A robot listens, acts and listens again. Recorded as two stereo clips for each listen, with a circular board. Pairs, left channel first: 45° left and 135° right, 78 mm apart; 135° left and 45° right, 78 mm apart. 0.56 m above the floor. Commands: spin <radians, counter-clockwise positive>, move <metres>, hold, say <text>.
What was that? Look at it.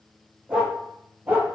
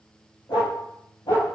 spin 2.71
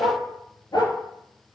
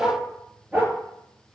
spin 0.35
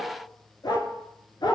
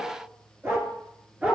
spin 0.52
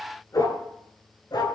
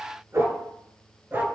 spin 0.26
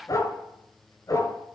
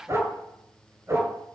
say Facing the dog barking, 1 to 2 m away.